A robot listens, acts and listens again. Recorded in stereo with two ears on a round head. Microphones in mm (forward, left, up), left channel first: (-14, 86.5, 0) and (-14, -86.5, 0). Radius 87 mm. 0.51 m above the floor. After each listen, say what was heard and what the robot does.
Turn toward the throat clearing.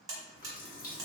Keep listening.
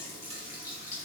Keep listening.
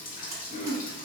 The throat clearing: about 35° left or 145° left. Turn 35° left.
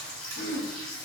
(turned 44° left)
So it is at 95° left. Turn 95° left.
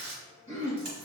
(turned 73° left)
The throat clearing is now 20° left. Turn 20° left.
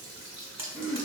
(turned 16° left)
Found it: throat clearing, straight ahead, 1 to 2 m away.